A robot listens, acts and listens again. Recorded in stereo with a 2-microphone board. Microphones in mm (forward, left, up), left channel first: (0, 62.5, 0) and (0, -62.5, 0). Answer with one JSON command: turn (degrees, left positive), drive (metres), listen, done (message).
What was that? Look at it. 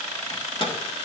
{"turn": 45}
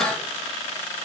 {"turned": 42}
{"listen": true}
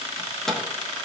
{"done": "Facing the microwave."}